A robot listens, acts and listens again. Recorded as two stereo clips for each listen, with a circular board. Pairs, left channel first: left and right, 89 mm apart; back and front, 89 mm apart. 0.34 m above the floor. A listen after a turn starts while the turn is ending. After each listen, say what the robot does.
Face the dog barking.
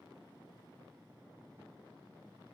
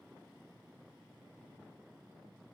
Keep listening.
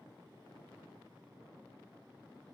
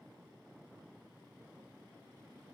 Keep listening.
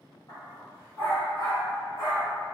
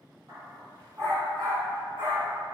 Turn 45° left.
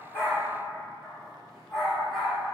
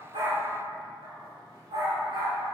Facing the dog barking.